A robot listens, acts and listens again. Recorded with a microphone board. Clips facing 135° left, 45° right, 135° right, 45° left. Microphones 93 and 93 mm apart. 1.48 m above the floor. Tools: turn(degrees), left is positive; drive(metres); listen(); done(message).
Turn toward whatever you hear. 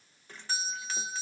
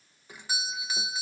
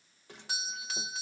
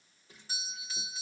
turn(degrees=-125)
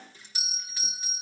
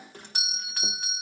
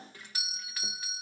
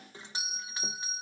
turn(degrees=-20)
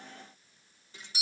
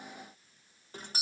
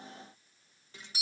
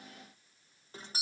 done("Facing the doorbell.")